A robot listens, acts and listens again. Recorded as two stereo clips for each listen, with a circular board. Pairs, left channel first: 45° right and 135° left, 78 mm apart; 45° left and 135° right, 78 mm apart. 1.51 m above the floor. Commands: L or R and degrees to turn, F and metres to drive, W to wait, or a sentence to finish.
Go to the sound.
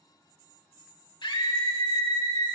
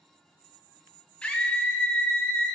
R30
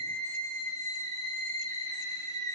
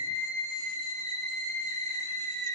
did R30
F1.0
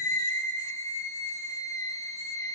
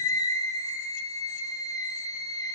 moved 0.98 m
F1.0
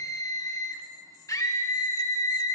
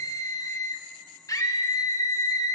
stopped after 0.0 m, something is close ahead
I am next to the scream.